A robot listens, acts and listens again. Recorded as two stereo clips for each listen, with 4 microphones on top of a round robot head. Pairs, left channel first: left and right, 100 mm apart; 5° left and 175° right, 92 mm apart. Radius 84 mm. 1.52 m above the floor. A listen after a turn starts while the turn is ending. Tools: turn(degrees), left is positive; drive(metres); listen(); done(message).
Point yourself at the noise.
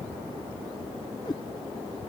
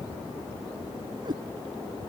turn(degrees=145)
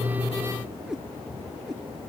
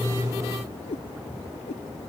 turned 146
done("Facing the cat meowing.")